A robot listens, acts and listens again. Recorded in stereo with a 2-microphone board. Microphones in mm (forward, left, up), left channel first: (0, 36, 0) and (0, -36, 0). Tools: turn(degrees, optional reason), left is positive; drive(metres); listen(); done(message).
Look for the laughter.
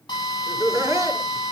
turn(degrees=-35, reason="The laughter: about 35° right or 145° right.")
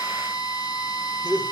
turn(degrees=-115, reason="So it is at 115° right.")
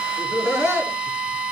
turn(degrees=-40, reason="The laughter is now 40° right.")
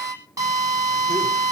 listen()
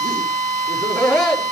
turn(degrees=-10, reason="The laughter is now 10° right.")
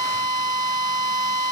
listen()
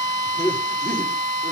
done("Found it: laughter, straight ahead.")